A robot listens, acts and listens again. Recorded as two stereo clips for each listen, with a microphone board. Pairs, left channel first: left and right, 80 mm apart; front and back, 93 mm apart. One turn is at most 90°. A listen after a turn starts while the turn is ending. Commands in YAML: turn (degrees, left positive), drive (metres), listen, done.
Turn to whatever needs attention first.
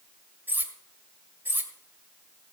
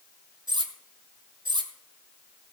listen: true
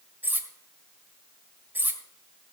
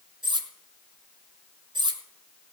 listen: true
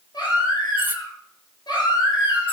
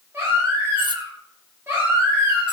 turn: 90
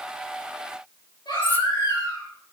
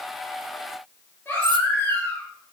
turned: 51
turn: 65
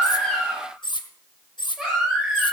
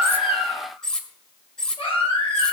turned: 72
done: "Found it: a baby crying, straight ahead, over 4 m away."